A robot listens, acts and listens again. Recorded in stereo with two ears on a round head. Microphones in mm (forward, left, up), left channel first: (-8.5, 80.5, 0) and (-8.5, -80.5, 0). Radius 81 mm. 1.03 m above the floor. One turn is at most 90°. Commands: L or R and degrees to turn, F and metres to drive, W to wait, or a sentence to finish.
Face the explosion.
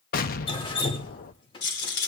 L50
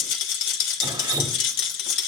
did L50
W
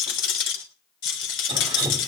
I heard an explosion, but can't make it out now. It was about straight ahead or 80° left.